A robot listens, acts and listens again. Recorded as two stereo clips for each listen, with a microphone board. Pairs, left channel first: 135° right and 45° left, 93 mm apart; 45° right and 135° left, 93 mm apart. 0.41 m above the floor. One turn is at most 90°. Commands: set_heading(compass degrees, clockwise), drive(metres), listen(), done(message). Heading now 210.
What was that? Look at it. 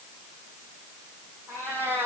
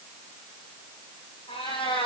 set_heading(230)
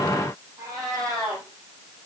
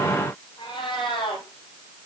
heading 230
done("Facing the cat meowing.")